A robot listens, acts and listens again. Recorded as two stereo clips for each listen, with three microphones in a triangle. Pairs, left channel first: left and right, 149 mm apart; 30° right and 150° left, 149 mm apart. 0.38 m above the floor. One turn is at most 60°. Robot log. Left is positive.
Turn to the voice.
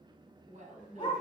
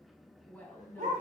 note: The woman speaking: 105° right.
cmd yaw -60
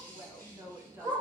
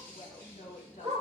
note: The woman speaking is now 20° right.
cmd yaw -20
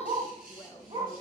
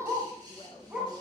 note: The woman speaking is now 20° left.
cmd yaw +20
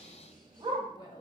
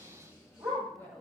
note: The woman speaking is now 40° left.
cmd yaw +40
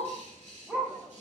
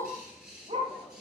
cmd idle
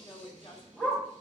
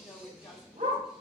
note: The woman speaking is now 20° left.
cmd yaw +20
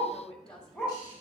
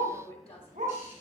end: Facing the woman speaking.